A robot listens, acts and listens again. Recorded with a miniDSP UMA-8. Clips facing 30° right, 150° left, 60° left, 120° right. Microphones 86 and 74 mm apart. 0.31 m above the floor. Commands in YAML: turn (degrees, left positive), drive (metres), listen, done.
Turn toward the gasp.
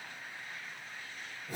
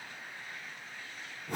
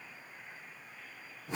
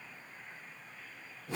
listen: true
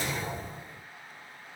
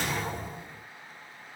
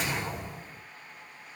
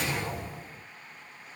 listen: true
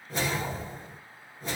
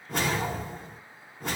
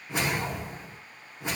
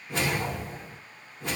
done: "I can't make out a gasp, only a whoosh."